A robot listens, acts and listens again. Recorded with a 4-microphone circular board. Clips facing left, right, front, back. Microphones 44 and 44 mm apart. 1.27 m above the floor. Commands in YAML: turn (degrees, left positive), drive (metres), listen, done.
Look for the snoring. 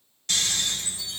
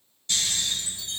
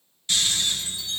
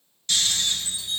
turn: 75
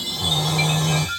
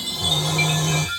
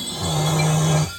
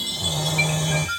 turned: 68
done: "Facing the snoring."